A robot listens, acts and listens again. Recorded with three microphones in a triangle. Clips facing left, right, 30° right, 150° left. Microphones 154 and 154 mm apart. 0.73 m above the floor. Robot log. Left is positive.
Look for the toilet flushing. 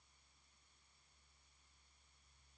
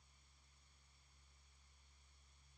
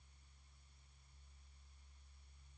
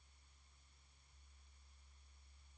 cmd idle
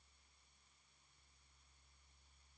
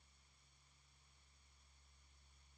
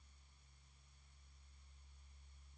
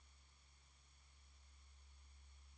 cmd idle
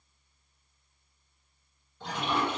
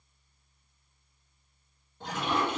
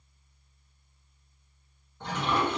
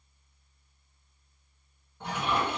note: The toilet flushing: 130° right.
cmd yaw -130
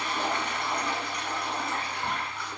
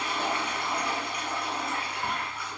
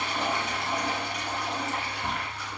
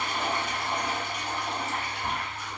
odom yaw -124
end: Found it: a toilet flushing, straight ahead.